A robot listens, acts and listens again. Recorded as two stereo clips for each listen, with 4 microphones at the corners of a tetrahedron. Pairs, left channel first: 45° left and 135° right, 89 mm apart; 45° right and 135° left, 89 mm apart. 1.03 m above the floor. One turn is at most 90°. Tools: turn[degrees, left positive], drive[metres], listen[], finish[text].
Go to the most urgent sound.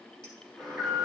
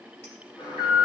Thought: The alarm: 50° right.
Action: turn[-50]
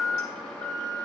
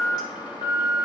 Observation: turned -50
Thought: The alarm is now 35° right.
Action: turn[-35]
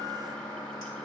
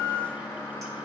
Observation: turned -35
Thought: The alarm is now 15° left.
Action: turn[15]
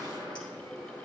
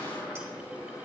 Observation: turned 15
Action: drive[1.0]
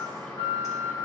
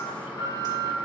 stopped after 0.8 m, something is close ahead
Action: finish[Blocked. The alarm is further on, straight ahead.]